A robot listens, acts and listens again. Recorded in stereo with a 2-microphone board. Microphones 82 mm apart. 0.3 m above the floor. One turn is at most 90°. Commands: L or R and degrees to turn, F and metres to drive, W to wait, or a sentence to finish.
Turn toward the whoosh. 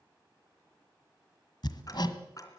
W
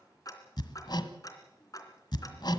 W
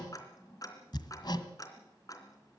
I can't make out a whoosh, only hammering and ticking.